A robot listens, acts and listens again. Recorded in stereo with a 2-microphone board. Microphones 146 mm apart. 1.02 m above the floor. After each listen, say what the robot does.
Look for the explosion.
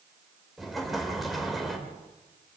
Turn 30° left.
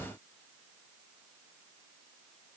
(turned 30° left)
Keep listening.
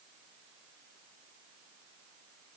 I heard an explosion, but can't make it out now. It was about 30° right or 150° left.